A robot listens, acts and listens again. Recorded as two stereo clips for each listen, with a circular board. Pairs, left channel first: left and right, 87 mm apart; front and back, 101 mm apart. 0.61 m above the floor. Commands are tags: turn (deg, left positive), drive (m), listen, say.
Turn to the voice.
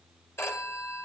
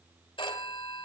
<listen/>
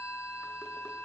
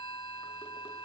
<listen/>
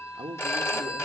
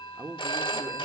<turn deg="-110"/>
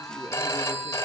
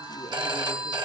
<listen/>
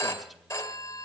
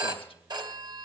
<listen/>
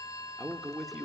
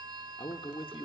<say>Facing the man speaking, 1 to 2 m away.</say>